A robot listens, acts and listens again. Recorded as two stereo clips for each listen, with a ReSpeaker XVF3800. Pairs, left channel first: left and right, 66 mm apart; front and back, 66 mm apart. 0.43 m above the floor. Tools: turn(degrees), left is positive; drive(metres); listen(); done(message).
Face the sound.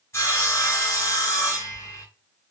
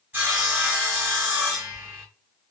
turn(degrees=125)
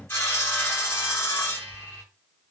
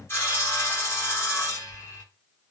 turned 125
turn(degrees=45)
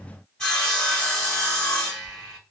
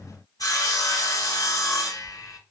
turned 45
turn(degrees=15)
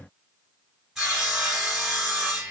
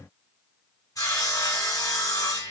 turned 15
done("Found it: sawing, straight ahead, 1 to 2 m away.")